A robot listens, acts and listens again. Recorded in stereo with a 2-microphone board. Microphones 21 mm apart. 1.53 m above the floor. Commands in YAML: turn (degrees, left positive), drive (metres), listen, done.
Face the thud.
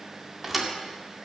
turn: -30
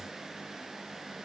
listen: true
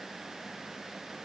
done: "I heard a thud, but can't make it out now. It was about 25° left or 145° right."